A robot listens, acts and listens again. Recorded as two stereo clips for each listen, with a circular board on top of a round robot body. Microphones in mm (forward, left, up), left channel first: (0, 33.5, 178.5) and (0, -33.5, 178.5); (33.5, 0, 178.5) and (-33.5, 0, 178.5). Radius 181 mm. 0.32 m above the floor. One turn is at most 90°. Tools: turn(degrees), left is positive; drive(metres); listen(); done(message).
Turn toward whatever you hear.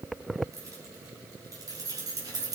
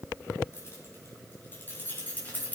turn(degrees=-65)
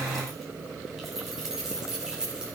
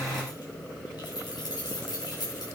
turn(degrees=-10)
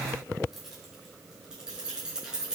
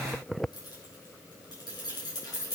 turn(degrees=-10)
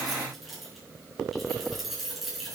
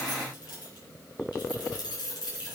done("Found it: keys jangling, straight ahead.")